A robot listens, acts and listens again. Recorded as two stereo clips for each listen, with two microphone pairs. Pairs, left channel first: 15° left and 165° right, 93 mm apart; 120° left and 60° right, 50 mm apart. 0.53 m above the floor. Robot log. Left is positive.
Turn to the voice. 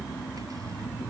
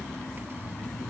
cmd idle
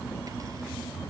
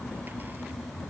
cmd idle
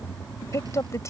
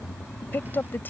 note: The woman speaking: 70° left.
cmd yaw +70
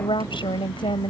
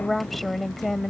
note: The woman speaking is now 30° left.
cmd yaw +30
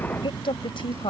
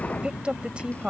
end: Facing the woman speaking.